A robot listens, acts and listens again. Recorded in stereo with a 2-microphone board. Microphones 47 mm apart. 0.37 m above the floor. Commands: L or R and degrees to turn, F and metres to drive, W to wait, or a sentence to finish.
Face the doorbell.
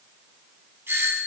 R60
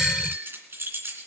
W
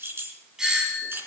R15
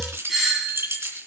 Facing the doorbell.